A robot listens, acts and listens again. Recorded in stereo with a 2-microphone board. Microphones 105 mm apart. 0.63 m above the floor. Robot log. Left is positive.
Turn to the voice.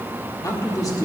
note: The man speaking: about 35° left or 145° left.
cmd yaw +35
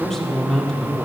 end: Found it: a man speaking, straight ahead.